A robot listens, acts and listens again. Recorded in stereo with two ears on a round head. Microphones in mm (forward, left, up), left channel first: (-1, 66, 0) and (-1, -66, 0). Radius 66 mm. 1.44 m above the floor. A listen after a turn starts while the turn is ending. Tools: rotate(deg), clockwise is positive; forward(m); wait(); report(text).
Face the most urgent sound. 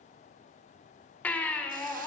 rotate(-30)
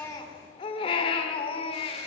rotate(-140)
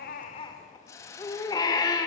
rotate(-30)
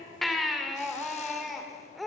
report("Facing the baby crying.")